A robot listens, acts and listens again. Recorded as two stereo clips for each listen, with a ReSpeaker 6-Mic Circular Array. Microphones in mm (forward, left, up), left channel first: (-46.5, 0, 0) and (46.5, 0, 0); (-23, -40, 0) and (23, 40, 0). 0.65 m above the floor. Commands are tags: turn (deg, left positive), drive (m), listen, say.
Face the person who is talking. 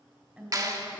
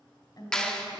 <turn deg="-75"/>
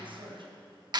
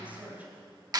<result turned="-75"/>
<turn deg="-10"/>
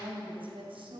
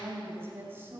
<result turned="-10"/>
<say>Found it: a woman speaking, straight ahead, 2 to 4 m away.</say>